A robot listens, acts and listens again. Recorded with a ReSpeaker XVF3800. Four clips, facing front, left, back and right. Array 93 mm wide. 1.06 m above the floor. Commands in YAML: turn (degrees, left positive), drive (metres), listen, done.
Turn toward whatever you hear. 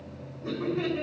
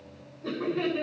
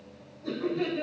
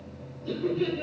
turn: 70
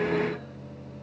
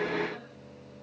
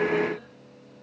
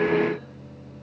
listen: true
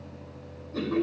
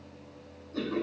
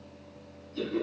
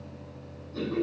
turn: 10
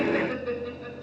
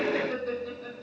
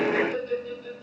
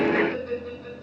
done: "Found it: laughter, straight ahead."